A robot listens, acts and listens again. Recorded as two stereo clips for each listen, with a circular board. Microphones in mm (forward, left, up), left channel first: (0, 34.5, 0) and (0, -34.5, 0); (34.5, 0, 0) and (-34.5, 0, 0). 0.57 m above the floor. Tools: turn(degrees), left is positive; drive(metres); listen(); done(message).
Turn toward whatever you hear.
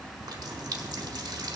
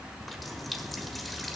turn(degrees=-90)
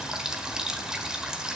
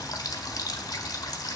turn(degrees=-10)
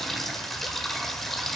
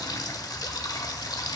done("Found it: a running tap, straight ahead.")